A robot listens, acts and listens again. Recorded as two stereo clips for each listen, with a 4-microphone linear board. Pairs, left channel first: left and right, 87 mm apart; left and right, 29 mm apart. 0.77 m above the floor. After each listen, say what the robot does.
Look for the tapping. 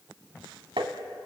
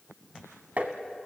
Turn 75° right.
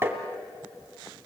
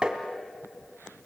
Turn 30° right.
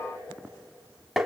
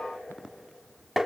Found it: tapping, straight ahead, 1 to 2 m away.